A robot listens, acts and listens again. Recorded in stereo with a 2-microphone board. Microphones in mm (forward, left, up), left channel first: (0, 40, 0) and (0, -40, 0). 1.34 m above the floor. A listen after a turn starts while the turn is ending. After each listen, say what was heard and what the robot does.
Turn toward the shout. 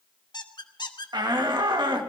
The shout: about 65° right or 115° right. Turn 65° right.
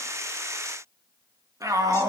So it is at 45° right. Turn 45° right.
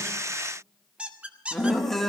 Found it: a shout, straight ahead, 2 to 4 m away.